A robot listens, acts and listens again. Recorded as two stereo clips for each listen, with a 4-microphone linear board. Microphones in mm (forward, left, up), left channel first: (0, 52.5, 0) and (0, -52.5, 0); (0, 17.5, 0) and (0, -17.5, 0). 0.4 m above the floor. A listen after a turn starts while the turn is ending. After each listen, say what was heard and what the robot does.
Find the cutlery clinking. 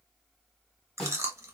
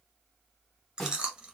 Keep listening.
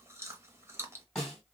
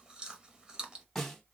Keep listening.
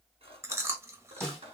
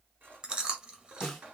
The cutlery clinking: about 70° right or 110° right. Turn 70° right.
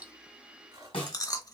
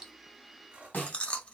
So it is at 40° right. Turn 40° right.
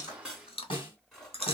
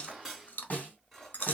Found it: cutlery clinking, straight ahead, 2 to 4 m away.